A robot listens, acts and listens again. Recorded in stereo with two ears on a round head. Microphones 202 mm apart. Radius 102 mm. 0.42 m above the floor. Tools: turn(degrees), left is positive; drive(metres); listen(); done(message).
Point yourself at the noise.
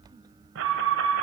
turn(degrees=-60)
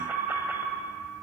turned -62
turn(degrees=-10)
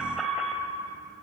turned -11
done("Facing the alarm, 1 to 2 m away.")